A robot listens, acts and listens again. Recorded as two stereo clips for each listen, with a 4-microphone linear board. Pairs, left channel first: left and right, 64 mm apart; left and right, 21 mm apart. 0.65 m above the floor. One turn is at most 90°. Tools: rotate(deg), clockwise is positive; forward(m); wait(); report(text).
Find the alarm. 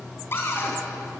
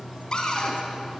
wait()
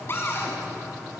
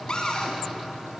wait()
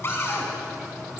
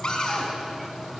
report("I can't make out an alarm, only a cupboard door.")